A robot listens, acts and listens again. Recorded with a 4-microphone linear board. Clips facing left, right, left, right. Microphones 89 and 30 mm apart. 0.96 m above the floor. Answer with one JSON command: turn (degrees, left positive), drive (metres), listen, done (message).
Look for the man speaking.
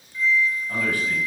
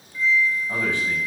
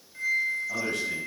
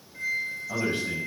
{"turn": -20}
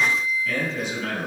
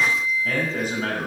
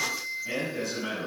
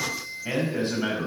{"turn": -135}
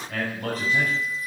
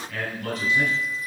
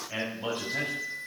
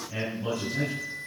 {"turn": 40}
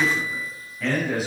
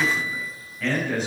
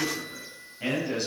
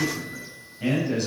{"done": "Found it: a man speaking, straight ahead, over 4 m away."}